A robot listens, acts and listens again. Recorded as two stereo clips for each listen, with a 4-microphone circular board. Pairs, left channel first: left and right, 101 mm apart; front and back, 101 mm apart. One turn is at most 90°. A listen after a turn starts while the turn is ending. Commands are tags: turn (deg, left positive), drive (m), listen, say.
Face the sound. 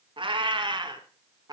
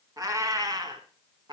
<turn deg="-90"/>
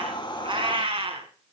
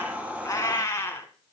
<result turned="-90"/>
<turn deg="-70"/>
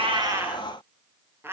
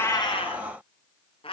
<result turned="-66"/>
<turn deg="-25"/>
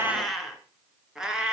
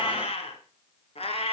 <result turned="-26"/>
<turn deg="-10"/>
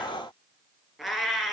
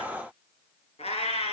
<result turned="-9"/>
<say>Facing the cat meowing, 2 to 4 m away.</say>